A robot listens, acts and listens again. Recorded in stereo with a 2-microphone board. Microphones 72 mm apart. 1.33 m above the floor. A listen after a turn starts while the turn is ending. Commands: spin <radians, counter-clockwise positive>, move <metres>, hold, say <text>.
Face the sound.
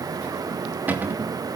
spin -0.44
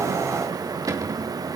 spin -2.27
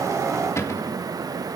spin 0.70
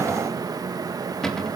say Found it: a cupboard door, straight ahead, 2 to 4 m away.